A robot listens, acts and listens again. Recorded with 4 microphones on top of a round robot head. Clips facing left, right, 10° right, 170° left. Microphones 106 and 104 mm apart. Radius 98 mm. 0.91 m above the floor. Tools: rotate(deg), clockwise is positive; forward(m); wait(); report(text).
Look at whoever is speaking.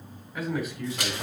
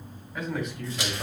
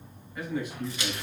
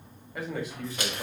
rotate(-170)
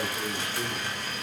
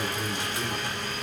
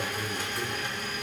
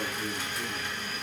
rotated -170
rotate(15)
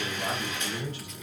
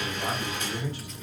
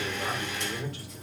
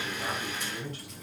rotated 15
rotate(10)
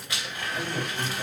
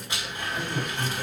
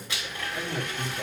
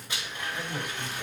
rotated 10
report("Found it: a man speaking, straight ahead, 2 to 4 m away.")